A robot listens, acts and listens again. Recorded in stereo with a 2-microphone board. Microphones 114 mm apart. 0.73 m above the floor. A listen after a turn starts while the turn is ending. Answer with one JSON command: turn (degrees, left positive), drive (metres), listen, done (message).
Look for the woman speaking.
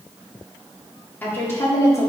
{"turn": 30}
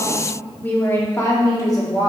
{"turn": 40}
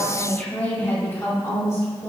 {"turn": 30}
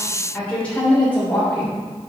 {"turn": 15}
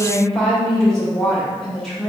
{"done": "Facing the woman speaking, 2 to 4 m away."}